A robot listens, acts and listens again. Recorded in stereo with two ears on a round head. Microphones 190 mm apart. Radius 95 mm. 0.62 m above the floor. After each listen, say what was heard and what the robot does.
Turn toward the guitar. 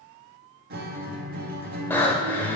The guitar: about 45° right or 135° right. Turn 45° right.
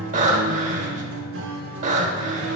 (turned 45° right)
So it is at 80° right. Turn 80° right.
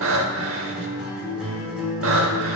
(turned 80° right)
Found it: a guitar, straight ahead, 1 to 2 m away.